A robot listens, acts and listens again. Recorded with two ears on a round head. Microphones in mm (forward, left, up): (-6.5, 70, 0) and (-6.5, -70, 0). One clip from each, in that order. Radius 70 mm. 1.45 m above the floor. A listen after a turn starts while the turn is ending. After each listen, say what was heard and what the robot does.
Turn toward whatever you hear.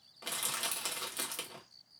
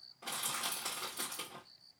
The crushing: about 50° left or 130° left. Turn 50° left.
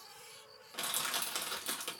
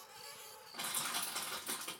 So it is at 85° left. Turn 85° left.
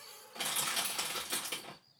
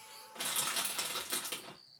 Found it: crushing, straight ahead, 1 to 2 m away.